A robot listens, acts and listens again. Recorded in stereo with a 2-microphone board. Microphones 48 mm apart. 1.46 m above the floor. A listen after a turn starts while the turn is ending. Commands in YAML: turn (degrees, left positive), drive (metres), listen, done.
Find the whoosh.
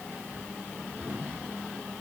listen: true
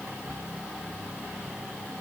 listen: true
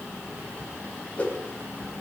turn: 25
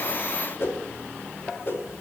turn: 130
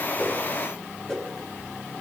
turn: 10
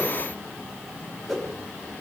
done: "Facing the whoosh, over 4 m away."